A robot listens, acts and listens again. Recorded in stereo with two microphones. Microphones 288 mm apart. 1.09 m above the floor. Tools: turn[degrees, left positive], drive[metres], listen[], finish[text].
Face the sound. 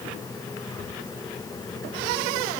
Action: listen[]
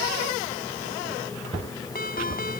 Thought: The ringtone: about 30° left or 150° left.
Action: turn[30]
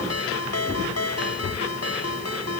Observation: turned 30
Thought: So it is at 120° left.
Action: turn[120]
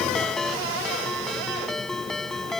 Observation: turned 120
Action: finish[Found it: a ringtone, straight ahead.]